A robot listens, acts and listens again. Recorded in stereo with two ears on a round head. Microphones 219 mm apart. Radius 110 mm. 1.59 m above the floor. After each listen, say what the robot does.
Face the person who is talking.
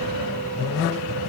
Keep listening.
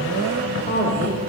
Turn 35° left.
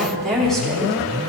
Facing the woman speaking, over 4 m away.